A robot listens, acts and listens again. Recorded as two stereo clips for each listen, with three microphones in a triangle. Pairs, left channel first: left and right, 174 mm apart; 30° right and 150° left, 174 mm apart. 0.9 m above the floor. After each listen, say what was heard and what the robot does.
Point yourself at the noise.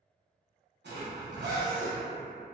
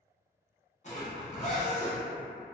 The zipper: 80° right. Turn 80° right.
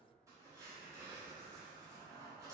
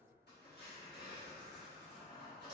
The zipper is now 15° right. Turn 15° right.
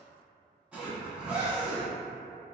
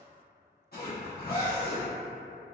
Found it: a zipper, straight ahead.